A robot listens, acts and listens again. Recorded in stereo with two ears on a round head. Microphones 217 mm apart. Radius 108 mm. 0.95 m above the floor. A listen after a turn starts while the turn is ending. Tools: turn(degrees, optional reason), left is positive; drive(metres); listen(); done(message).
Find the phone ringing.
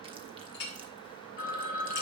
turn(degrees=35, reason="The phone ringing: about 35° left or 145° left.")
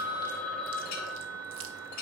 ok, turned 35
done("Facing the phone ringing, 1 to 2 m away.")